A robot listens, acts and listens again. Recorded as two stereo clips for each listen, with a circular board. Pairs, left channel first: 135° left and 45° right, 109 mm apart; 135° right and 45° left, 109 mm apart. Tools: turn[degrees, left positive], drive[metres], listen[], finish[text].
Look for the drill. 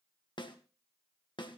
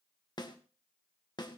Action: listen[]
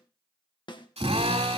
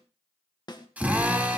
Thought: The drill: 30° right.
Action: turn[-30]
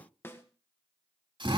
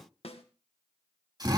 Action: finish[Facing the drill, 2 to 4 m away.]